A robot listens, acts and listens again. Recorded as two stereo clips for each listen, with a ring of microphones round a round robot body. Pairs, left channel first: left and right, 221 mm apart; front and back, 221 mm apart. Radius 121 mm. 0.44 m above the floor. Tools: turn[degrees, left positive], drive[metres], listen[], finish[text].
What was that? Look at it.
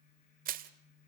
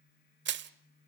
Thought: The crushing: 145° right.
Action: turn[-145]
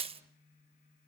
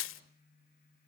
Thought: The crushing is now 25° right.
Action: turn[-25]
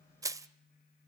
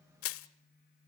Thought: The crushing is now 15° right.
Action: turn[-15]
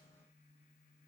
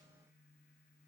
Action: listen[]
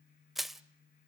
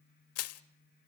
Action: finish[Facing the crushing, 1 to 2 m away.]